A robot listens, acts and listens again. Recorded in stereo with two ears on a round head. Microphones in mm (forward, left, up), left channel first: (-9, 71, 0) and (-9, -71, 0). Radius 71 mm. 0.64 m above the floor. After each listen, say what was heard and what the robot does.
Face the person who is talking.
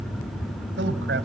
The man speaking: about 70° right or 110° right. Turn 70° right.
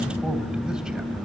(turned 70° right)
Keep listening.
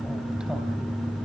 Keep listening.
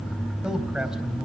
Facing the man speaking, 2 to 4 m away.